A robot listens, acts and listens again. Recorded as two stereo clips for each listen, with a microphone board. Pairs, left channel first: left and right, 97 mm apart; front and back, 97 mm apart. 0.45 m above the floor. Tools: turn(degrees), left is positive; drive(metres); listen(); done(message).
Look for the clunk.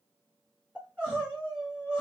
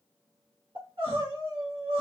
listen()
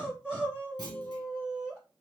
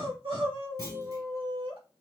turn(degrees=-135)
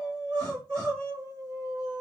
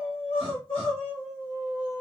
done("Facing where the clunk came from. I can't hear it now.")